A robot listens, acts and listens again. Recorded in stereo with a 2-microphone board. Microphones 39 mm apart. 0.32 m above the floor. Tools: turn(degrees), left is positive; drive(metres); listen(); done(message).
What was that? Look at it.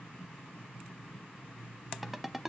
turn(degrees=-30)
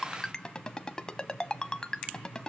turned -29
turn(degrees=20)
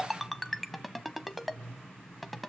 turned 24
done("Found it: a ringtone, straight ahead.")